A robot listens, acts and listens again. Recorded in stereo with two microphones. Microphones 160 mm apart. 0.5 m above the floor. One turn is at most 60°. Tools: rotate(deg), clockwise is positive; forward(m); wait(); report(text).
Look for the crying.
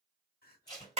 rotate(-60)
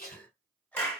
rotate(-10)
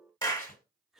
report("Found it: crying, straight ahead, under 1 m away.")